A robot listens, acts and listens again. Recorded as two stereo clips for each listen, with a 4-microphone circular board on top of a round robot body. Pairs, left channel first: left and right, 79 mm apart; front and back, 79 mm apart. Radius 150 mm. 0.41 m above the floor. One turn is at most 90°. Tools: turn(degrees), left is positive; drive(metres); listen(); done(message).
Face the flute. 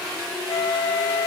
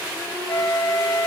turn(degrees=60)
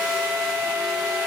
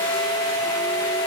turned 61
done("Found it: a flute, straight ahead, 1 to 2 m away.")